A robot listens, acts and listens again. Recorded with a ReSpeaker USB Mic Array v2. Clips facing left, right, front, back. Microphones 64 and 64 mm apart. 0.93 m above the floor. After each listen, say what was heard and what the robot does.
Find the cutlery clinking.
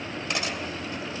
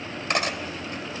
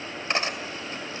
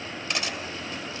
The cutlery clinking: 55° right. Turn 55° right.
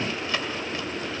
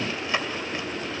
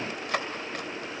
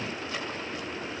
The cutlery clinking is now 20° right. Turn 20° right.
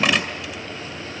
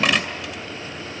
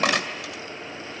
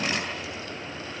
Facing the cutlery clinking, 2 to 4 m away.